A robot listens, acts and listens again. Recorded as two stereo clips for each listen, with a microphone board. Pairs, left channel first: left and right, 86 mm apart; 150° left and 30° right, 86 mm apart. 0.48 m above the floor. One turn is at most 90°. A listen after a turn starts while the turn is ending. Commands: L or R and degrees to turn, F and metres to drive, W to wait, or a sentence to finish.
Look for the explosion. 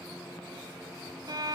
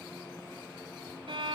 W
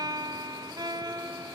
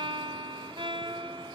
W
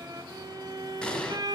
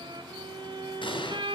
L90
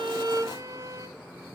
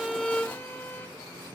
L80
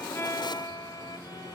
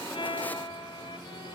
Facing where the explosion came from. I can't hear it now.